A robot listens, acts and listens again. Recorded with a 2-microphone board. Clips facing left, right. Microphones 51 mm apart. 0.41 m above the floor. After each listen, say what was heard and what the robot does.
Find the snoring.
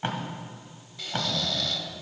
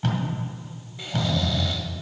The snoring: about 20° right or 160° right. Turn 20° right.
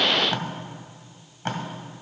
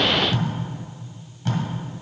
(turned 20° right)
Keep listening.
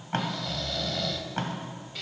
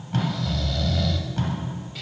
Facing the snoring.